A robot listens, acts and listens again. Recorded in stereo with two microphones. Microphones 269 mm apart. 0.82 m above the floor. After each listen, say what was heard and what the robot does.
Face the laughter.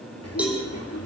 The laughter: about 70° left or 110° left. Turn 70° left.
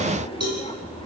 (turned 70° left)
So it is at 20° left. Turn 20° left.
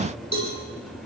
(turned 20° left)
Found it: laughter, straight ahead.